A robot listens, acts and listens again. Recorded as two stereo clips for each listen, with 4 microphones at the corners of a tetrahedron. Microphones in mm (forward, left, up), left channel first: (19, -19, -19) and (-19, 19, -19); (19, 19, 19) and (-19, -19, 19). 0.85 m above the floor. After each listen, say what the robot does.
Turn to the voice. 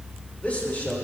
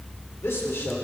Turn 10° left.
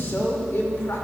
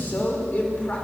Turn 15° right.
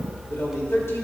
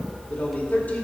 Turn 10° right.
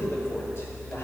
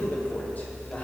Turn 10° right.
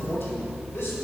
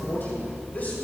Turn 10° right.
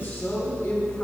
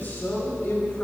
Found it: a man speaking, straight ahead.